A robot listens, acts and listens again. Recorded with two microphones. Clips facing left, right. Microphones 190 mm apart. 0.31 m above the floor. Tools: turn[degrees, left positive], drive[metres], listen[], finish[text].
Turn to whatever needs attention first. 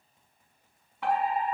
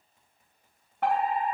Thought: The fire alarm: about 55° right or 125° right.
Action: turn[-55]
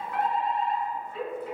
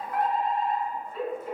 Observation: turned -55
Thought: So it is at 55° right.
Action: turn[-55]
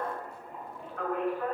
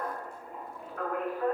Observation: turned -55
Action: finish[Facing the fire alarm, over 4 m away.]